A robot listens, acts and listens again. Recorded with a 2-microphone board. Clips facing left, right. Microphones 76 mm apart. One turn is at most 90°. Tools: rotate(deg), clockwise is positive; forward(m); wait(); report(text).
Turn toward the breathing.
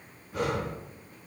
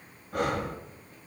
rotate(65)
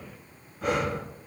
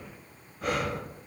report("Found it: breathing, straight ahead.")